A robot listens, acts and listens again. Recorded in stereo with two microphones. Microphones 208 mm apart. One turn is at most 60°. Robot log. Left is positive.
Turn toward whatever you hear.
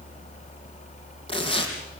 note: The tearing paper: about 25° left or 155° left.
cmd yaw +25
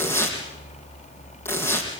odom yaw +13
note: So it is at 10° left.
cmd yaw +10
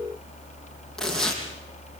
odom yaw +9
end: Found it: tearing paper, straight ahead, over 4 m away.